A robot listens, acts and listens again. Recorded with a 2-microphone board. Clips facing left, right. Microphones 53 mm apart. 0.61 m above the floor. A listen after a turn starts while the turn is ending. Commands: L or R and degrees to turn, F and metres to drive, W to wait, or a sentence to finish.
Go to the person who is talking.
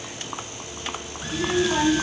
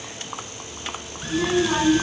R90
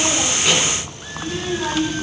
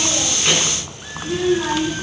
F1.0
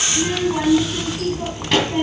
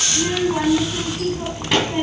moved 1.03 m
F1.0
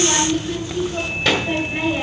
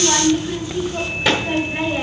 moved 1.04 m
F1.0
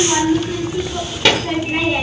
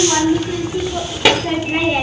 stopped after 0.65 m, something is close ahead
R10
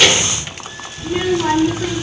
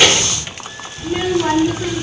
Arrived at the child speaking, straight ahead.